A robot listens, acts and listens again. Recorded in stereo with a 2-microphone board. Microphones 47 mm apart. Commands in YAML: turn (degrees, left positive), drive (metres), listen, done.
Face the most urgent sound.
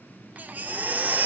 turn: -35
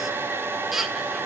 done: "Found it: a baby crying, straight ahead."